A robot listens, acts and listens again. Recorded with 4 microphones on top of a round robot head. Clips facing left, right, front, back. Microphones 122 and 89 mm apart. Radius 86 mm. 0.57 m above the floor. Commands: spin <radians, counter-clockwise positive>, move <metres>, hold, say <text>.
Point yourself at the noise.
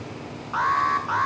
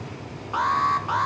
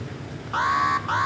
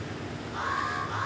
spin -0.35
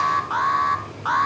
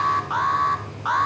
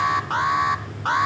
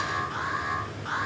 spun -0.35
say Found it: an alarm, straight ahead.